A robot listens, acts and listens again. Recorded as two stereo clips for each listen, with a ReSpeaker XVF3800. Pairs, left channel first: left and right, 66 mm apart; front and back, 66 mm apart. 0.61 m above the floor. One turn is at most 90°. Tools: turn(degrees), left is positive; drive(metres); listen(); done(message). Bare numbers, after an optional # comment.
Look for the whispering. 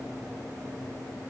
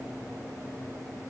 listen()
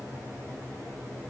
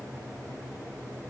listen()
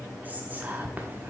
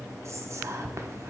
# The whispering: 150° right.
turn(-90)
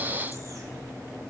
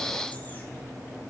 # Nothing new. It was at 60° right.
turn(-60)
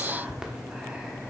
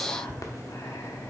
# The whispering is now 10° right.
turn(-10)
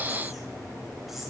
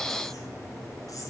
listen()
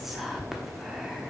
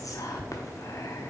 done("Facing the whispering.")